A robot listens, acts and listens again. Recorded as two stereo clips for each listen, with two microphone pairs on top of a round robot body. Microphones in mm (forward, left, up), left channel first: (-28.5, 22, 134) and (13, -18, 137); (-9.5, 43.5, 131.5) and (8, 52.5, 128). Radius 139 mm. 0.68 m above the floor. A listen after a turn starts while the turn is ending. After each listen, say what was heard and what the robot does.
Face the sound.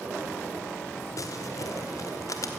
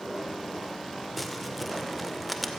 The crumpling: 115° left. Turn 115° left.
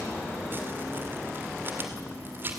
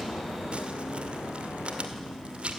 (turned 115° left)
The crumpling is now 10° left. Turn 10° left.
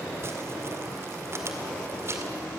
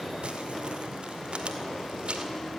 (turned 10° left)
Found it: crumpling, straight ahead, 2 to 4 m away.